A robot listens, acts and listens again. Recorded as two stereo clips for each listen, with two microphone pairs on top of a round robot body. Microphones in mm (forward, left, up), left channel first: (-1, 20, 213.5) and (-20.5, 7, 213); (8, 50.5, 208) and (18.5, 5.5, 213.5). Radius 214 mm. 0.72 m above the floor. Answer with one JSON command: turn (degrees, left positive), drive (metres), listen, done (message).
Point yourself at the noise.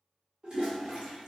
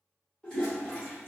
{"turn": 175}
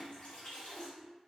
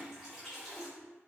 {"done": "Found it: a toilet flushing, straight ahead, 1 to 2 m away."}